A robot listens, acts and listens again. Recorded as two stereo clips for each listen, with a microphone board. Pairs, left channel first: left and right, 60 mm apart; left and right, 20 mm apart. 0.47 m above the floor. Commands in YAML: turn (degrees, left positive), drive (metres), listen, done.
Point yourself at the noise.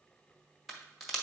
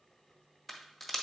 turn: 30
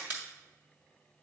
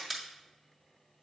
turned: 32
turn: -30
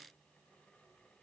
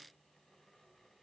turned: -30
done: "I heard a crack from this way, but can't make it out now."